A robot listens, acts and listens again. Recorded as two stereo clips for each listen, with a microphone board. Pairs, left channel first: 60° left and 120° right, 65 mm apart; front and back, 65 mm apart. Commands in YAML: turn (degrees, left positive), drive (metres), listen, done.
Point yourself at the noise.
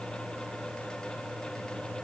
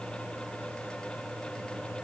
listen: true
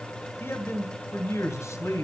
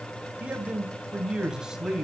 turn: 100
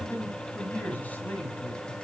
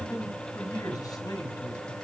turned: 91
done: "Found it: a man speaking, straight ahead, 2 to 4 m away."